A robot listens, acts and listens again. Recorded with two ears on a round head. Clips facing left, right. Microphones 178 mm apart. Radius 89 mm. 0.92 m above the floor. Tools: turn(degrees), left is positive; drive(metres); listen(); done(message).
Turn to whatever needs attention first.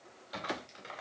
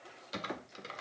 listen()
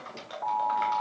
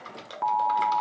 turn(degrees=-90)
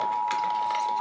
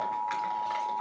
turn(degrees=-15)
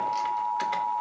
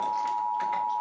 done("Facing the alarm.")